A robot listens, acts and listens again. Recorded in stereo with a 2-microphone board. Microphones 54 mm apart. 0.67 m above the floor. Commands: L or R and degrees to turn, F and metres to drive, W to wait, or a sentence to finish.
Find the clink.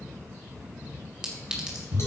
R30
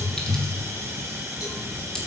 W
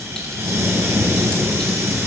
W
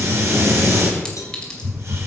I heard a clink, but can't make it out now. It was about 15° left or 135° right.